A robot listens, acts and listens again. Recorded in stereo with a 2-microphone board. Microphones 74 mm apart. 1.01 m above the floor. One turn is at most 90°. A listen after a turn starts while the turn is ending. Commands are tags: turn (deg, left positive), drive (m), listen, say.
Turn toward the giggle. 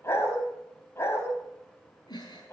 <turn deg="70"/>
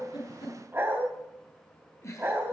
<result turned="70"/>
<turn deg="40"/>
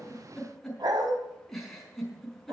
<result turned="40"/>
<say>Found it: a giggle, straight ahead.</say>